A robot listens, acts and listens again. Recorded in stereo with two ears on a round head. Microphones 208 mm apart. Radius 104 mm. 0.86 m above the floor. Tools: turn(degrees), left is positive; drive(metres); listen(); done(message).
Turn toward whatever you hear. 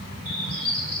turn(degrees=-65)
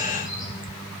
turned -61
listen()
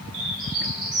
turn(degrees=-45)
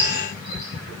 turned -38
listen()
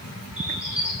done("Found it: a bird, straight ahead.")